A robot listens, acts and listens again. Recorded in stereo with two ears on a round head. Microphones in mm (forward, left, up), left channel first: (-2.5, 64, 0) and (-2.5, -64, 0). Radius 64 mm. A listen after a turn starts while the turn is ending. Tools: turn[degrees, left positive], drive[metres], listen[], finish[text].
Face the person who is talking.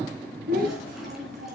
Thought: The child speaking: about 65° right or 115° right.
Action: turn[-65]
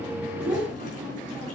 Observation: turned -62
Action: listen[]
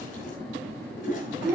Action: finish[Found it: a child speaking, straight ahead.]